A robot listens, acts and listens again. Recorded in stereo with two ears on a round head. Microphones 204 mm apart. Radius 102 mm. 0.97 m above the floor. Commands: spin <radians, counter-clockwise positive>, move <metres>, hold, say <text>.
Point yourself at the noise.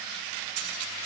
spin -1.57
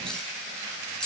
say Facing the cutlery clinking.